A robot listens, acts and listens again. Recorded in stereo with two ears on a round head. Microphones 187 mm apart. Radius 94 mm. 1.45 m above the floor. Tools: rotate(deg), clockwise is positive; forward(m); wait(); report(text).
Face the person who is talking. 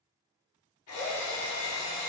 wait()
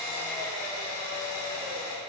wait()
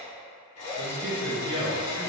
rotate(60)
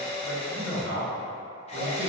rotate(60)
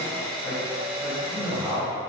report("Found it: a man speaking, straight ahead, 1 to 2 m away.")